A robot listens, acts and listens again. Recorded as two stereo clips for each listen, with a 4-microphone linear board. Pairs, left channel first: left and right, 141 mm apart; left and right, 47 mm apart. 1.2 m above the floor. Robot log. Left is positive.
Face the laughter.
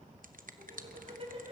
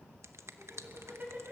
note: The laughter: about 40° right or 140° right.
cmd yaw -40
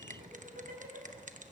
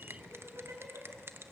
note: So it is at 95° right.
cmd yaw -95
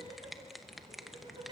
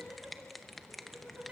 note: The laughter is now 35° right.
cmd yaw -35
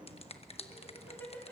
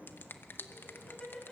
note: The laughter is now 10° left.
cmd yaw +10
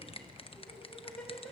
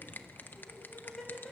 end: Found it: laughter, straight ahead.